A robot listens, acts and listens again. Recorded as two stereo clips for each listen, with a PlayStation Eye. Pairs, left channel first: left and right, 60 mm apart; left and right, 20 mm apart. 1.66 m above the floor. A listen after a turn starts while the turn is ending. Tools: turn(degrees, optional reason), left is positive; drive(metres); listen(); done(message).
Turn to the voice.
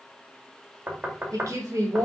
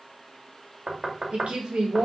turn(degrees=-65, reason="The woman speaking: about 65° right or 115° right.")
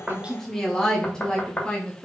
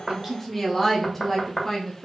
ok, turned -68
turn(degrees=20, reason="So it is at 20° left.")
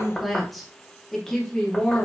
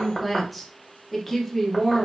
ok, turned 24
turn(degrees=20, reason="The woman speaking is now 20° left.")
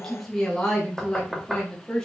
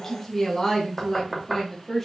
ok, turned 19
turn(degrees=10, reason="The woman speaking is now 10° left.")
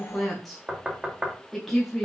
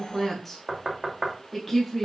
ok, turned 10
done("Facing the woman speaking.")